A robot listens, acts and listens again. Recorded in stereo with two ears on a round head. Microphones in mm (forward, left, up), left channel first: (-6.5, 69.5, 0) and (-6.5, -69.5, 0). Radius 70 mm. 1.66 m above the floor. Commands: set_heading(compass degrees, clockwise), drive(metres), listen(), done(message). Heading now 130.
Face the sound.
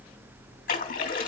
set_heading(75)
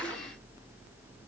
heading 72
listen()
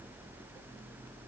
done("I heard a splash, but can't make it out now. It was about 5° right or 70° left.")